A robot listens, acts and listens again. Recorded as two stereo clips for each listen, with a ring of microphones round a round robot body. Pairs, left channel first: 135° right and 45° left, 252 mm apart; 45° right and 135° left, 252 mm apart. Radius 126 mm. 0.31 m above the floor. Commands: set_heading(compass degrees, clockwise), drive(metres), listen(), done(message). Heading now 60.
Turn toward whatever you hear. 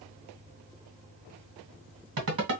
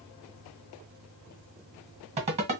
set_heading(350)
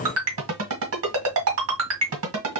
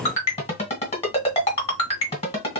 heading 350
set_heading(330)
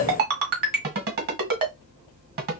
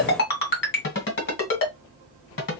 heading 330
done("Facing the ringtone.")